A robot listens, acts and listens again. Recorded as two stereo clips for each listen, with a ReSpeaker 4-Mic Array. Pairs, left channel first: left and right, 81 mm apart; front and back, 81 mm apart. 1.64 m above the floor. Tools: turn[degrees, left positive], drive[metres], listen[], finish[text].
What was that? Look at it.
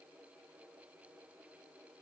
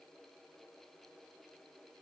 Action: listen[]
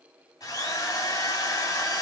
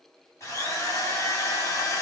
Thought: The drill: 55° left.
Action: turn[55]
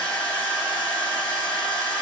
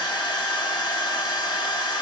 Thought: The drill is now 20° left.
Action: turn[20]
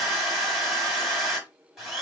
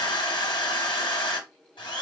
Action: finish[Found it: a drill, straight ahead, 2 to 4 m away.]